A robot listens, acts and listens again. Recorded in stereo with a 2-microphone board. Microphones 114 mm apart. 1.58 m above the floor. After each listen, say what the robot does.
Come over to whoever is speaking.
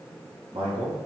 Turn 60° right.
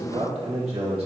Turn 65° right.
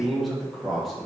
Drive 1.0 m forward.
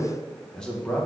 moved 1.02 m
Turn 10° left.
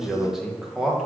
Drive 1.0 m forward.
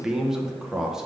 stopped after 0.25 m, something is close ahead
Arrived at the man speaking, straight ahead.